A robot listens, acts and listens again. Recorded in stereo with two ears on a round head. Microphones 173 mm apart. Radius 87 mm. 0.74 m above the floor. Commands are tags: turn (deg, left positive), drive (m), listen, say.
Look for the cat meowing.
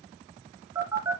<listen/>
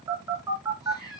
<turn deg="20"/>
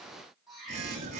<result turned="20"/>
<say>Facing the cat meowing.</say>